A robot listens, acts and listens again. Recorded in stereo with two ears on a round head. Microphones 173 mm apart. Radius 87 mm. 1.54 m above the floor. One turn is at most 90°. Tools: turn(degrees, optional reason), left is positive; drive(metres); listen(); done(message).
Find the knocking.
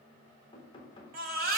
turn(degrees=30, reason="The knocking: about 30° left or 150° left.")
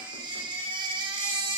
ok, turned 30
listen()
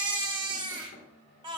turn(degrees=90, reason="So it is at 120° left.")
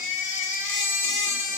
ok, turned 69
turn(degrees=55, reason="Nothing new. It was at 55° left.")
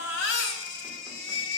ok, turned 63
turn(degrees=-10, reason="Nothing new. It was at 10° right.")
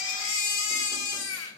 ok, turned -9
done("I heard knocking from this way, but can't make it out now.")